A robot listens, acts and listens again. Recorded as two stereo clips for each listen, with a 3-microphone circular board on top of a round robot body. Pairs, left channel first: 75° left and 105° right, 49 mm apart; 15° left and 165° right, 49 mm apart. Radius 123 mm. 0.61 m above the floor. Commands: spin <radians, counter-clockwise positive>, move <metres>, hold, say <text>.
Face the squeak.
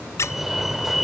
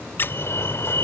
spin 0.96
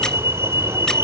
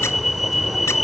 hold
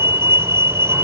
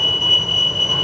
hold
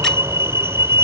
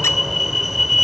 say Facing where the squeak came from. I can't hear it now.